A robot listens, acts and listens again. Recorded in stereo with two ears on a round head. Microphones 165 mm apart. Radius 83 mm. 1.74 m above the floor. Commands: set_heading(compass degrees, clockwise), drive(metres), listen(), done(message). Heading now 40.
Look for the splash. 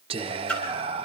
set_heading(10)
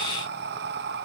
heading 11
listen()
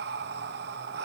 done("I heard a splash, but can't make it out now. It was about 25° right or 145° left.")